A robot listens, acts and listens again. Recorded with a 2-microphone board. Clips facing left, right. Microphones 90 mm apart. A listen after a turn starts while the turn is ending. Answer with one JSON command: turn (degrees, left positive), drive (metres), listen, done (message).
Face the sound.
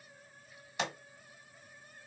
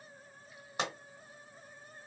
{"turn": -40}
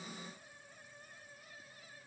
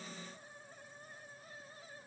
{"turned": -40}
{"listen": true}
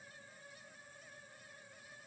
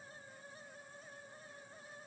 {"done": "I heard a pop, but can't make it out now. It was about straight ahead or 100° right."}